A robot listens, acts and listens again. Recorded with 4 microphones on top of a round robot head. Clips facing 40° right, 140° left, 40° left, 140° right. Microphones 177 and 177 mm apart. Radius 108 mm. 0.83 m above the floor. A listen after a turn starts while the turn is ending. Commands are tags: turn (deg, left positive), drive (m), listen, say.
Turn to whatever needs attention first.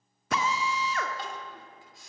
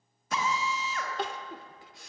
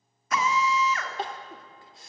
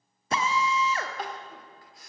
<turn deg="110"/>
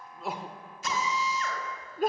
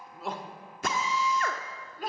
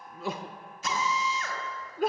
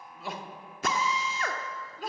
<say>Found it: crying, straight ahead.</say>